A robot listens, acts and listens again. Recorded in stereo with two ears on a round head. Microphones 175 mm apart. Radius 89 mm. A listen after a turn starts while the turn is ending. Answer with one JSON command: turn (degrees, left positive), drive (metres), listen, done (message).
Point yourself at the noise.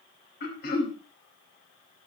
{"turn": 55}
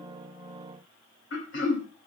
{"turn": 65}
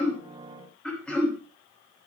{"done": "Facing the throat clearing."}